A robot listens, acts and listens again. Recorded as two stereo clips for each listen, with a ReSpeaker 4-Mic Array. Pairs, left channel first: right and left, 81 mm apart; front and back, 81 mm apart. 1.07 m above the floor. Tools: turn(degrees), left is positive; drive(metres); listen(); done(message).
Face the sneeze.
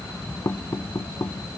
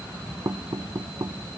listen()
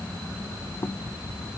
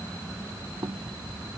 listen()
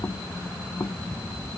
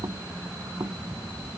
done("I can't make out a sneeze to turn to.")